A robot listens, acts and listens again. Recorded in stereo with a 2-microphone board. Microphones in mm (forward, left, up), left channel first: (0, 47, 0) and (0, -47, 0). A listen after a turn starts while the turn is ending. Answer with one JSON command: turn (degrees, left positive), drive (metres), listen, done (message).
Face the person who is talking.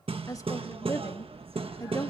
{"turn": 35}
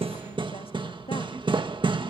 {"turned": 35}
{"turn": 105}
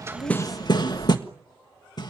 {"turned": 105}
{"listen": true}
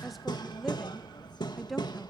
{"done": "Facing the woman speaking, 2 to 4 m away."}